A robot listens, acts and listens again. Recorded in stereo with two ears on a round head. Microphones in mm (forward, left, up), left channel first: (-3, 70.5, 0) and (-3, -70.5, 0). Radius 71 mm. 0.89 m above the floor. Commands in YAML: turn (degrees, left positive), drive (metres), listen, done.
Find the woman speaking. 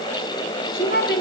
turn: 65
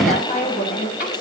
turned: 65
turn: 55
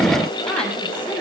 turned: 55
turn: 10
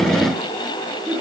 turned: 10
done: "Facing the woman speaking."